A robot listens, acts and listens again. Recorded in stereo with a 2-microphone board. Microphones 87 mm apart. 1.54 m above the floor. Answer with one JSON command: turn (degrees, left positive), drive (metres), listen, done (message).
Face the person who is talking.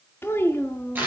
{"turn": 25}
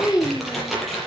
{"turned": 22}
{"turn": 45}
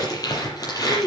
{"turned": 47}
{"turn": 100}
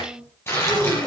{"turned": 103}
{"turn": -10}
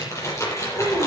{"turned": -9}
{"done": "Facing the child speaking."}